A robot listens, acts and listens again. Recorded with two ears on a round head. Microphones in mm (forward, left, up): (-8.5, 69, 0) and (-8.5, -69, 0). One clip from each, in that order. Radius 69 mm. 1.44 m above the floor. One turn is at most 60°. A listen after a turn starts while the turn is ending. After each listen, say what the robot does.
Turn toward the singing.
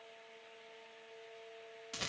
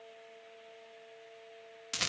Keep listening.
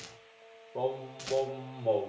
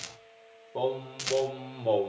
Turn 60° right.
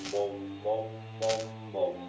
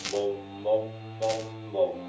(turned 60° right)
Turn 30° right.
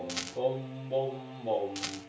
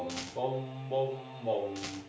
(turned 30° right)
Found it: singing, straight ahead.